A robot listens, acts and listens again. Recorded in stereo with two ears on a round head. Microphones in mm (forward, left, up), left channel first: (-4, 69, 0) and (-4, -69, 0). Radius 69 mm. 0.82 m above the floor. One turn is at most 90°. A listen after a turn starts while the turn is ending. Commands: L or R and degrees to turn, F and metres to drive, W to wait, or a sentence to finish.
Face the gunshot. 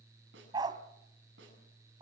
W
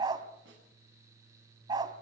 W
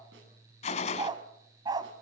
L40
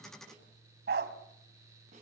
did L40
W
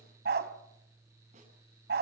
I heard a gunshot, but can't make it out now. It was about straight ahead or 100° left.